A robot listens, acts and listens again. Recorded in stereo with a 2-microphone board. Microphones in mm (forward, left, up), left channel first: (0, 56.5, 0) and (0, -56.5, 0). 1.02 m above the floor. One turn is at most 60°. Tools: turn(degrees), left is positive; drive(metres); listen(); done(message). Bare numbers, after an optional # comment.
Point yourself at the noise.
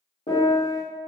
# The piano: about 65° left or 115° left.
turn(60)
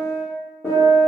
# So it is at 15° left.
turn(15)
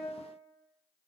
listen()
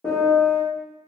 done("Found it: a piano, straight ahead, 1 to 2 m away.")